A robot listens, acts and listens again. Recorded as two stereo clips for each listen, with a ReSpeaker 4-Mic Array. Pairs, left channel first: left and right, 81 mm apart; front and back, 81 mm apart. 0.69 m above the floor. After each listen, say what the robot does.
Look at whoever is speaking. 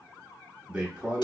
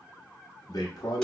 Turn 20° right.
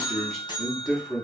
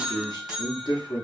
Found it: a man speaking, straight ahead.